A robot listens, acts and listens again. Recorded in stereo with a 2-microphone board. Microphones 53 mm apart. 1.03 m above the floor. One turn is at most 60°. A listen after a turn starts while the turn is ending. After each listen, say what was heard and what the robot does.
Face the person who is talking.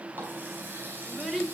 Turn 30° left.
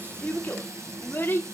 So it is at 140° left. Turn 60° left.
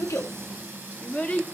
The child speaking is now 25° left. Turn 25° left.
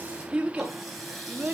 The child speaking is now 35° right. Turn 35° right.
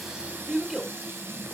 Found it: a child speaking, straight ahead, 2 to 4 m away.